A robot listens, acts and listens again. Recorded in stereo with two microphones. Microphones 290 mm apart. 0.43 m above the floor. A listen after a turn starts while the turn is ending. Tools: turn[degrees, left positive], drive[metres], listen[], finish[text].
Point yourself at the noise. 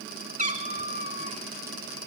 Thought: The cat meowing: about 25° right or 155° right.
Action: turn[-25]
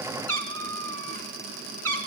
Thought: So it is at 125° right.
Action: turn[-125]
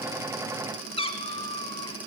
Thought: The cat meowing is now 20° left.
Action: turn[20]
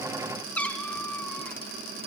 Action: finish[Found it: a cat meowing, straight ahead.]